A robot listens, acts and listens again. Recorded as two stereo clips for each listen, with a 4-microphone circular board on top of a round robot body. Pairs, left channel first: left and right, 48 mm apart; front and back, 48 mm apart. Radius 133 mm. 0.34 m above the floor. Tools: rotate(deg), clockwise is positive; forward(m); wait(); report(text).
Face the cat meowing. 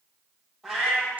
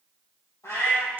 report("Facing the cat meowing, 2 to 4 m away.")